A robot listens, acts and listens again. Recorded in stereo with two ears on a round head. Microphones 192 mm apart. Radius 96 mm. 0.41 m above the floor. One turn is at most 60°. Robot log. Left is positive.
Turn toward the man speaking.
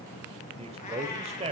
note: The man speaking: about 30° right or 150° right.
cmd yaw -30
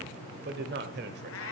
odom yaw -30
note: So it is at 110° right.
cmd yaw -60
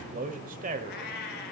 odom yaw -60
note: The man speaking is now 50° right.
cmd yaw -50
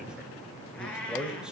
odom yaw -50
end: Facing the man speaking.